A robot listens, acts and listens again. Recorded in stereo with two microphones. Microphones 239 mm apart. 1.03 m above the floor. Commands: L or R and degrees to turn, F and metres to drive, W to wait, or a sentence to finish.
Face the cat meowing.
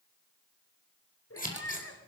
L75
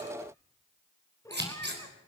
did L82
L15
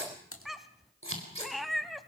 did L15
Facing the cat meowing, 1 to 2 m away.